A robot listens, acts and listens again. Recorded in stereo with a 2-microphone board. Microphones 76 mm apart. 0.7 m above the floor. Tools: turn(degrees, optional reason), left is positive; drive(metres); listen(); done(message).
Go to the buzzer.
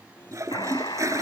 turn(degrees=70, reason="The buzzer: about 70° left or 110° left.")
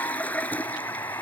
turn(degrees=40, reason="So it is at 40° left.")
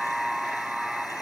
drive(metres=1.0)
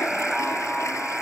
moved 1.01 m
drive(metres=1.0)
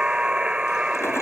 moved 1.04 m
turn(degrees=-15, reason="The buzzer is now 15° right.")
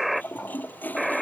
drive(metres=1.0)
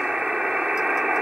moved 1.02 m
turn(degrees=-10, reason="The buzzer is now 10° right.")
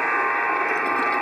drive(metres=1.0)
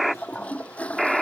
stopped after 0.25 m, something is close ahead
done("I am next to the buzzer.")